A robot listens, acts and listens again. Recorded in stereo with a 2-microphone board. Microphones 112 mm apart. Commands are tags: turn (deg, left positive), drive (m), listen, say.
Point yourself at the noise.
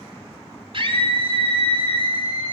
<turn deg="-50"/>
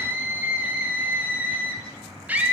<turn deg="-15"/>
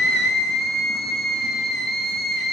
<say>Facing the scream, 2 to 4 m away.</say>